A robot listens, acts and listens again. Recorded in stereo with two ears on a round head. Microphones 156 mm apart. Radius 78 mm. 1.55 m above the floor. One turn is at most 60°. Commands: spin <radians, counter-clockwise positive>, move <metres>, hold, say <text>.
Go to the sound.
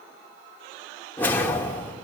spin 0.52
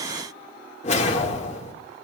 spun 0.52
spin 1.05
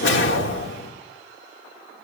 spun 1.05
spin 1.05
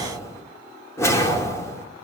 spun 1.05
spin 0.26
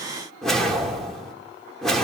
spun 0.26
move 1.0
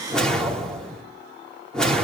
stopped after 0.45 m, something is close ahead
say Something is in my way. I am facing the whoosh but have not reached it.